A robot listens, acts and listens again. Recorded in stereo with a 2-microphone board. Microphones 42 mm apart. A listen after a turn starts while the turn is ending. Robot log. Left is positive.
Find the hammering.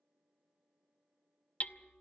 note: The hammering: about 35° left or 145° left.
cmd yaw +35
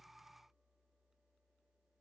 cmd idle
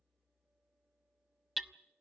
end: Facing the hammering, under 1 m away.